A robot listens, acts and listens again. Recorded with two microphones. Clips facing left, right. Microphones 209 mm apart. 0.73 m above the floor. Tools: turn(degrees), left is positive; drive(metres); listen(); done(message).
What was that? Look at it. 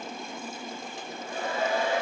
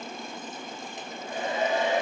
turn(degrees=-20)
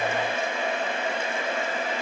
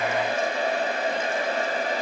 turn(degrees=-140)
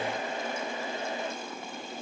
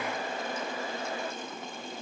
turn(degrees=25)
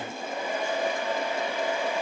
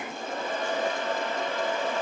turn(degrees=15)
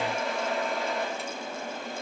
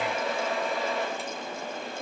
done("Found it: a hair dryer, straight ahead, 1 to 2 m away.")